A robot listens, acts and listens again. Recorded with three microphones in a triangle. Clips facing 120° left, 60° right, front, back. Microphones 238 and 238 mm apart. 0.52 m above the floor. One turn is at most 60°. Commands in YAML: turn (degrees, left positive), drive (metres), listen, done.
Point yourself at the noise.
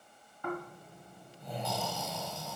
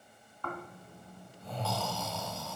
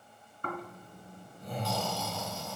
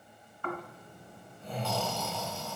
turn: 45
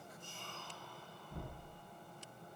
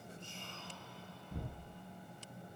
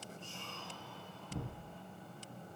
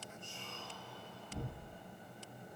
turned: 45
done: "Found it: snoring, straight ahead, 2 to 4 m away."